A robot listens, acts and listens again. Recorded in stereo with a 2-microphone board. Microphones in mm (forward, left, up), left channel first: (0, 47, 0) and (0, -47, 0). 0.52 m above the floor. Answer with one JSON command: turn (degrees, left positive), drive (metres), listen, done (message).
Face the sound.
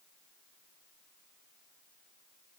{"listen": true}
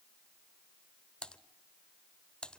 {"turn": 30}
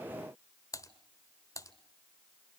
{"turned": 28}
{"turn": 140}
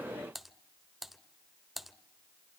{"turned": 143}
{"done": "Found it: typing on a keyboard, straight ahead, 1 to 2 m away."}